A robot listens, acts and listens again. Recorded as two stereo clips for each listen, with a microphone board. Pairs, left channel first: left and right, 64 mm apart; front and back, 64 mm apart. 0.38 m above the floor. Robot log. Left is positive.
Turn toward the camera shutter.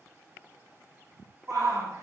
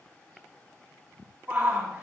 cmd idle
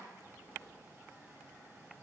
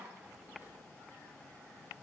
cmd idle
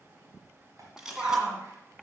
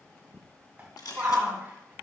note: The camera shutter: 10° right.
cmd yaw -10
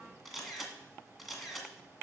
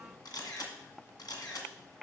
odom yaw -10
end: Found it: a camera shutter, straight ahead.